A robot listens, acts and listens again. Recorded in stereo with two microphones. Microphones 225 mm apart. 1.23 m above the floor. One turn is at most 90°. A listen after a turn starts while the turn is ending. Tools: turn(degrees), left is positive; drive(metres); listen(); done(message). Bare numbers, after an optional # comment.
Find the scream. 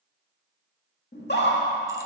# The scream: about 50° left or 130° left.
turn(50)
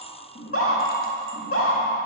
# So it is at 80° left.
turn(80)
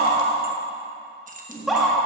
done("Facing the scream.")